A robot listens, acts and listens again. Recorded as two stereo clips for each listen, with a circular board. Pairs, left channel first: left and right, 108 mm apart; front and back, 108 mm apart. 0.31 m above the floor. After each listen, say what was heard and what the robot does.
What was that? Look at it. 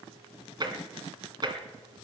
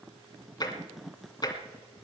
The tapping: 45° right. Turn 45° right.
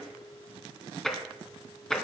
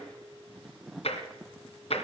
Facing the tapping.